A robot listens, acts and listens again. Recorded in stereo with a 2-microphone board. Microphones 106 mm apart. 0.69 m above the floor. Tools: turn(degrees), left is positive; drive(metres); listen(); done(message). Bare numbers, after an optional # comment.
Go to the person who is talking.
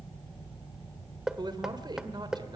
# The man speaking: about 45° right or 135° right.
turn(-45)
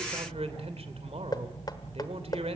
# So it is at 90° right.
turn(-90)
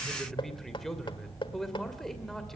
drive(1.0)
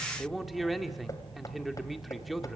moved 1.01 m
drive(1.0)
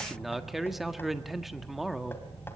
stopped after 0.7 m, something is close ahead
done("I am next to the man speaking.")